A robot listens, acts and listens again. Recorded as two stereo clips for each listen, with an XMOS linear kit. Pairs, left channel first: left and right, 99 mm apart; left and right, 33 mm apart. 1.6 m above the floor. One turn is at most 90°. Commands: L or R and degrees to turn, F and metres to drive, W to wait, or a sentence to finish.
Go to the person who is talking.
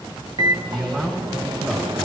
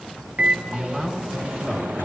R30
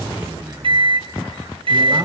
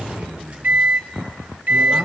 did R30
R90
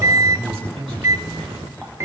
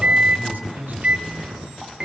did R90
R85
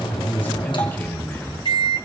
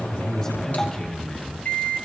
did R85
L20
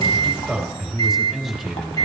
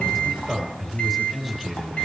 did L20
F1.0
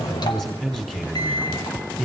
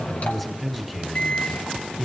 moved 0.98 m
F1.0
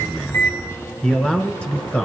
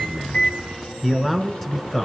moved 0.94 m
L10
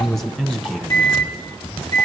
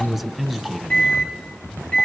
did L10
F1.0
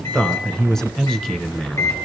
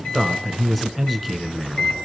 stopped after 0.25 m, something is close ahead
Arrived at the man speaking, straight ahead.